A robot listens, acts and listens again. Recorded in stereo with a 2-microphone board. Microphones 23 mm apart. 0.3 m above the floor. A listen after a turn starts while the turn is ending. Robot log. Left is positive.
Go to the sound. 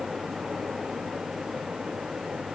cmd idle
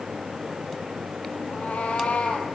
cmd yaw +90
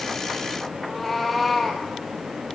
cmd fwd 1.0
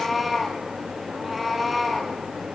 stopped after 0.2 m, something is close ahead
end: Something is in my way. I am facing the cat meowing but have not reached it.